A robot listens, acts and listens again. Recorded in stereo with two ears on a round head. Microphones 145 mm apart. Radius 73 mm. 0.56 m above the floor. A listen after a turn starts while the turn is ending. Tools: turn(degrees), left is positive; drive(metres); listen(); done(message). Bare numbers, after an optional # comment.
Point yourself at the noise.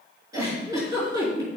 # The giggle: about 20° right or 160° right.
turn(-20)
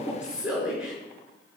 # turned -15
done("Found it: a giggle, straight ahead.")